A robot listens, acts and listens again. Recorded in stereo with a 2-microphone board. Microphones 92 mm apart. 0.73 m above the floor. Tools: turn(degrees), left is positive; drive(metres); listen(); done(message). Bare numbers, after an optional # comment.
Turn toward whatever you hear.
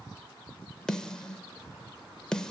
turn(30)
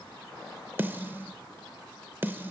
# So it is at 25° right.
turn(-25)
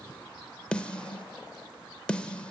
# The snare drum is now 15° left.
turn(15)
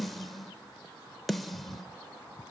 done("Facing the snare drum, under 1 m away.")